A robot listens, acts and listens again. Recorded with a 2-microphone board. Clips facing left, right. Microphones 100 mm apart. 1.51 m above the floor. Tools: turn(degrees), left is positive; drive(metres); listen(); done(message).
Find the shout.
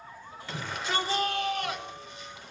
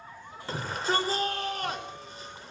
turn(degrees=-40)
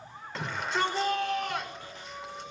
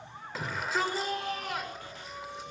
done("Facing the shout, over 4 m away.")